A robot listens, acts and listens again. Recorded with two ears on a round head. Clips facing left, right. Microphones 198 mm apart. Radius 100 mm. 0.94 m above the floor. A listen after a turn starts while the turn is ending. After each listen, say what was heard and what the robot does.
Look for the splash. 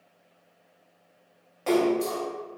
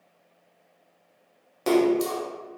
The splash: about 50° right or 130° right. Turn 50° right.
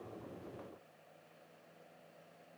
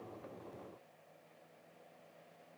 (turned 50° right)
Keep listening.
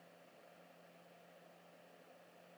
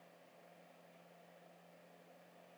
I heard a splash, but can't make it out now. It was about straight ahead or 80° right.